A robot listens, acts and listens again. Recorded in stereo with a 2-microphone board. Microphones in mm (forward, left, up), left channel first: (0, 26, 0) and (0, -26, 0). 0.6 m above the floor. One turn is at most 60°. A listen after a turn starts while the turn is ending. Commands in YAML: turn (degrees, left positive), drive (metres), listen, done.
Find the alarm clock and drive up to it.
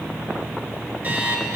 turn: -30
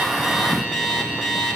drive: 1.0
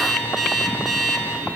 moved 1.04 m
drive: 1.0
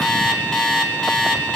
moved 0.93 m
drive: 1.0
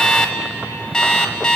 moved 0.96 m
turn: 15
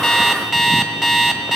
drive: 1.0
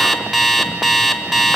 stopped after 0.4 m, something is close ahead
done: "I am next to the alarm clock."